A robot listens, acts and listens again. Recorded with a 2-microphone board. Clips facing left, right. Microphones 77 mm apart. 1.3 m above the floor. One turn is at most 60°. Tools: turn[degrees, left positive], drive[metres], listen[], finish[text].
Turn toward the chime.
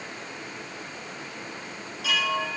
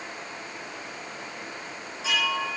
Thought: The chime: about 25° right or 155° right.
Action: turn[-25]
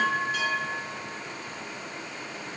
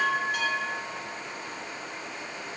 Thought: So it is at 125° right.
Action: turn[-60]
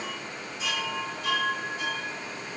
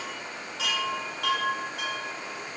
Thought: The chime is now 80° right.
Action: turn[-60]
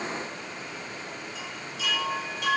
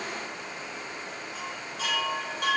Thought: The chime is now 45° right.
Action: turn[-45]
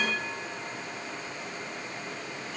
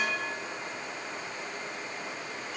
Action: listen[]
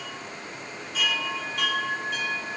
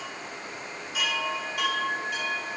Action: finish[Facing the chime.]